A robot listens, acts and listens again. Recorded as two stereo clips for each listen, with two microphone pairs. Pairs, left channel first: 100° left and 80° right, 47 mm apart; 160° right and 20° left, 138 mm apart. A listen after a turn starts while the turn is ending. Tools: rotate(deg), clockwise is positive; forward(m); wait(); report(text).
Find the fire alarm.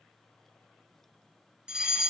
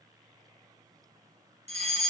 report("Facing the fire alarm.")